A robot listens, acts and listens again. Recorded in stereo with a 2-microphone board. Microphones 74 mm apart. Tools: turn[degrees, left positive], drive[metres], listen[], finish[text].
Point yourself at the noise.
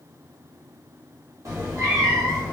Thought: The cat meowing: about 55° right or 125° right.
Action: turn[-55]
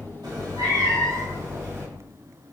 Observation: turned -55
Thought: So it is at 40° right.
Action: turn[-40]
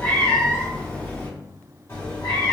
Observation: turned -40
Thought: The cat meowing is now 35° left.
Action: turn[35]
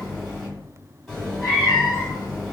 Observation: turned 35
Action: finish[Facing the cat meowing, 1 to 2 m away.]